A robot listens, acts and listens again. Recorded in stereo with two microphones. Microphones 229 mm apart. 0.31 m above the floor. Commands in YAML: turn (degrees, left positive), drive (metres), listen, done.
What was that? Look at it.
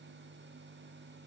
listen: true
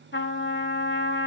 turn: 60
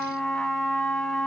done: "Facing the trumpet, under 1 m away."